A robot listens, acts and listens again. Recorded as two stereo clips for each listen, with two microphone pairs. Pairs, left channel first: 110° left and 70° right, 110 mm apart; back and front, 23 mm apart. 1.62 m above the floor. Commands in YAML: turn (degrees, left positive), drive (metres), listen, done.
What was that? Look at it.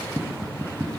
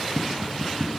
turn: -15
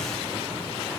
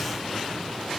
listen: true
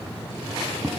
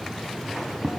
done: "Facing the tapping."